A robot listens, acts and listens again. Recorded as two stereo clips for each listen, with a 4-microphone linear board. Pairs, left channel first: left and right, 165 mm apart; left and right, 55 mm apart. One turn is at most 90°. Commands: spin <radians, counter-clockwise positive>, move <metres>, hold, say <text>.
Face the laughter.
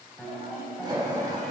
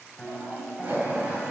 spin -0.44
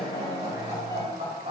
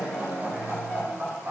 spin -1.57
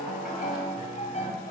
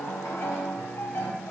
spin -0.87
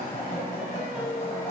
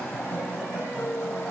spin 0.26
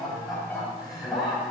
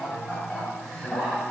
say Facing the laughter.